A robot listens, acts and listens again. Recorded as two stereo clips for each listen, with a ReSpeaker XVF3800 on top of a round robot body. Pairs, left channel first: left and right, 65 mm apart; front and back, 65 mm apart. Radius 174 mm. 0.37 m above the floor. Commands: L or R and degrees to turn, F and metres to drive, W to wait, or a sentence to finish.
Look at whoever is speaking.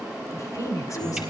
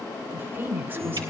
L125
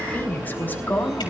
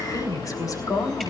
L25
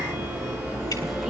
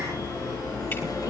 W
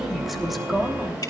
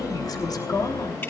Found it: a woman speaking, straight ahead, 2 to 4 m away.